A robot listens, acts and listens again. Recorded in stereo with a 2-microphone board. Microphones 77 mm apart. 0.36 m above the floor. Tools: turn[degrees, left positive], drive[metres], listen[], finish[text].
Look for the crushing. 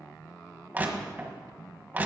Thought: The crushing: about 25° right or 155° right.
Action: turn[-25]
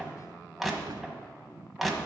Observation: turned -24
Action: finish[Found it: crushing, straight ahead, 1 to 2 m away.]